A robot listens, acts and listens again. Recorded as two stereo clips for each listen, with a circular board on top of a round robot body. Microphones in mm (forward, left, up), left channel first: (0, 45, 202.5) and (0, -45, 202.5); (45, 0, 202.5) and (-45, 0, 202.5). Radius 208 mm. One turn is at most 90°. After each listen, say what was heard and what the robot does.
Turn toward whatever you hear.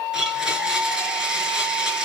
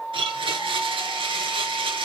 The blender: 170° right. Turn 90° right.
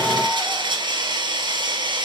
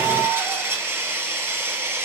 The blender is now 120° right. Turn 90° right.
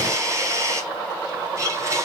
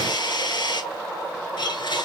The blender is now 35° right. Turn 35° right.
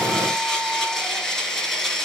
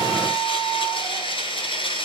Facing the blender, over 4 m away.